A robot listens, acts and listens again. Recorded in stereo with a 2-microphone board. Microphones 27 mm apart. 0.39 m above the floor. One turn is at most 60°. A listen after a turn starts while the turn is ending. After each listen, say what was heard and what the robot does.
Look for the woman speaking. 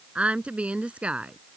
The woman speaking: about 55° right or 125° right. Turn 55° right.
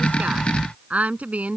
So it is at 70° right. Turn 60° right.
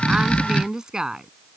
The woman speaking is now 25° right. Turn 25° right.
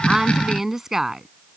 The woman speaking is now 15° right. Turn 15° right.
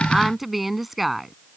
Facing the woman speaking.